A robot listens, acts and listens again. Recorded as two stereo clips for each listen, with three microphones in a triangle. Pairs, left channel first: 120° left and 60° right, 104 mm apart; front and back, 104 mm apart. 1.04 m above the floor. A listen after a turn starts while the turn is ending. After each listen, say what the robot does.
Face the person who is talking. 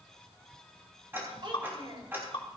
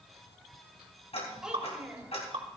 Turn 100° right.
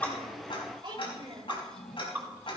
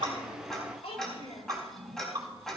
Turn 20° right.
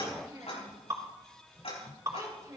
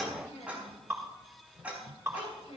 Facing the child speaking, 2 to 4 m away.